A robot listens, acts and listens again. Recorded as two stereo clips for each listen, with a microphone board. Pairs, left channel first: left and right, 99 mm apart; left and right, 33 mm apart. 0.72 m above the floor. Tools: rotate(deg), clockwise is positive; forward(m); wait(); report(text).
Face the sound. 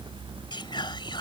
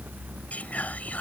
rotate(-50)
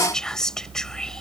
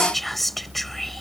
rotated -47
report("Found it: whispering, straight ahead.")